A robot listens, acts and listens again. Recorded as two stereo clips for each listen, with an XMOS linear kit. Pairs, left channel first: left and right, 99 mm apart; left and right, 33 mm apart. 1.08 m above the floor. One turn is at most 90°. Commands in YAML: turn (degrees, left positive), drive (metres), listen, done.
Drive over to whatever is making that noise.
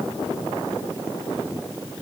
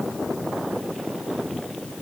listen: true
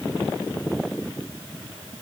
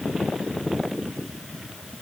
listen: true
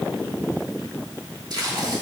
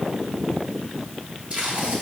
turn: -45
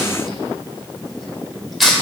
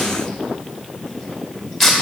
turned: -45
drive: 1.0
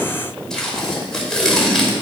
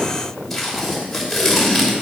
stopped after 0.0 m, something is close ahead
done: "Blocked. The tape being pulled is further on, straight ahead."